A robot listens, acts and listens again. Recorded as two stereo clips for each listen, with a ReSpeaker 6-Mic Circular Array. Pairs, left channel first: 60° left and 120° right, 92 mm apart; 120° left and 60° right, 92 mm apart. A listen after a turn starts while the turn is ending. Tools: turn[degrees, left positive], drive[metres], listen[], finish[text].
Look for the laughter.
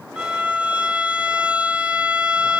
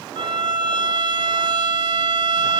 Action: listen[]
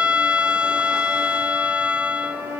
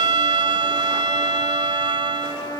Action: listen[]
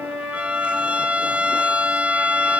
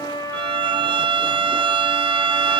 Action: finish[I can't make out laughter to turn to.]